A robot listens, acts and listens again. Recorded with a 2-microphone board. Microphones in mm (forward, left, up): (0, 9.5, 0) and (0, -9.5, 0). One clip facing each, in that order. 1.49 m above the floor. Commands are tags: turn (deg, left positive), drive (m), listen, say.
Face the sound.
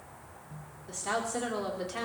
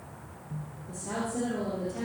<turn deg="90"/>
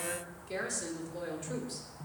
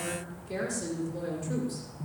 <turn deg="15"/>
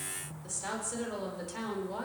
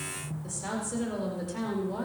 <turn deg="10"/>
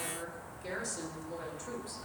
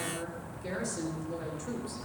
<say>Facing the woman speaking.</say>